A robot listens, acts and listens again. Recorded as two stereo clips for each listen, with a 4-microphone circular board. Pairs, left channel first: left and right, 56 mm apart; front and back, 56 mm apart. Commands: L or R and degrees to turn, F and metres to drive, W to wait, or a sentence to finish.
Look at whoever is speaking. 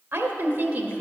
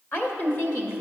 R30
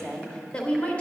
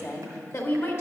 L30
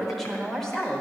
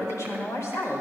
L15
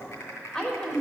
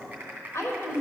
L20
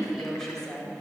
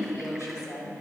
L15
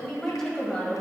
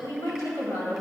L15
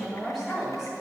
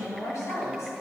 Facing the woman speaking, 2 to 4 m away.